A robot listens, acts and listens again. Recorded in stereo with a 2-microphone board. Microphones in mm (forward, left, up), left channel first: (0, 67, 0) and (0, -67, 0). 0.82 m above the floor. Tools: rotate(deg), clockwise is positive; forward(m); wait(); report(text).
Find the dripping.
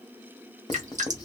rotate(65)
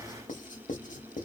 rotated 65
wait()
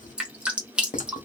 rotate(10)
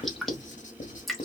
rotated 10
report("Found it: dripping, straight ahead, under 1 m away.")